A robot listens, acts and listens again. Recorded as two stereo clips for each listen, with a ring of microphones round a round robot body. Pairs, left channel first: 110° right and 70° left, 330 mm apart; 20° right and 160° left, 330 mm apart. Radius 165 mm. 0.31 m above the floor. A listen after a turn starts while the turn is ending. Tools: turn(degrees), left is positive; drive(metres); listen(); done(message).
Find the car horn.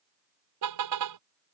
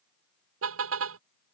turn(degrees=105)
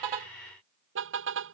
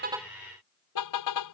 turn(degrees=15)
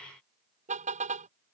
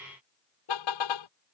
done("Found it: a car horn, straight ahead.")